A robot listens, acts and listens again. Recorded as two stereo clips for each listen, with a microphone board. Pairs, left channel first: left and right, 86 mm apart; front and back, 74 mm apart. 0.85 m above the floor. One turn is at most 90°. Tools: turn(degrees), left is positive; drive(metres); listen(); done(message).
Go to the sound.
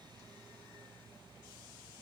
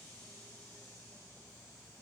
listen()
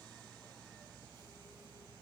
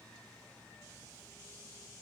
listen()
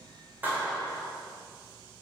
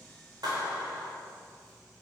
turn(degrees=-90)
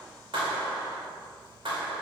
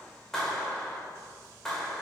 turn(degrees=-80)
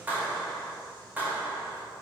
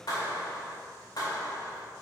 turn(degrees=-20)
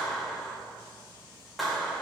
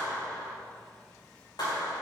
drive(metres=1.0)
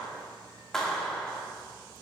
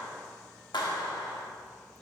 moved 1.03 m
drive(metres=1.0)
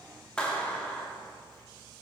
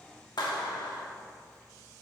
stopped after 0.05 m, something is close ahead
turn(degrees=10)
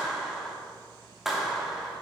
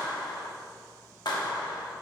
done("I am next to the clap.")